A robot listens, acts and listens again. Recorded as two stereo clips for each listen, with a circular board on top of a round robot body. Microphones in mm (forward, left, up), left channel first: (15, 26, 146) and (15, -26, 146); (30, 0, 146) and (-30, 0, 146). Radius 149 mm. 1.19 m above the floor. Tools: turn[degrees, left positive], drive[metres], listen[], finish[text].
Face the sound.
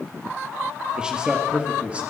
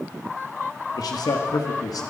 Thought: The man speaking: 20° right.
Action: turn[-20]
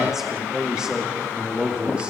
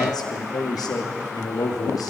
Thought: The man speaking is now 20° right.
Action: turn[-20]
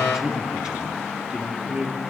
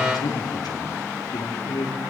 Thought: The man speaking is now 20° right.
Action: turn[-20]
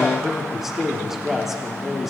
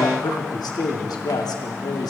Action: finish[Found it: a man speaking, straight ahead, 2 to 4 m away.]